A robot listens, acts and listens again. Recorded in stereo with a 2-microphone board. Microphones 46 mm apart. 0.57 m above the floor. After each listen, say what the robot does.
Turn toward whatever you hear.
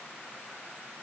Keep listening.
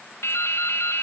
Turn 90° left.
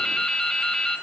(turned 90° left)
Turn 10° left.
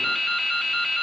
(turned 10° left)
Found it: dripping, straight ahead.